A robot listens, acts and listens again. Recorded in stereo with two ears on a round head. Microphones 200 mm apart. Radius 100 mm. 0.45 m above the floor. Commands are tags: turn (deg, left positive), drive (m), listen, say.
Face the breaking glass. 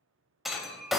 <turn deg="30"/>
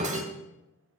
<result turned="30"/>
<turn deg="-30"/>
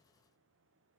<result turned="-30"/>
<say>Facing where the breaking glass came from. I can't hear it now.</say>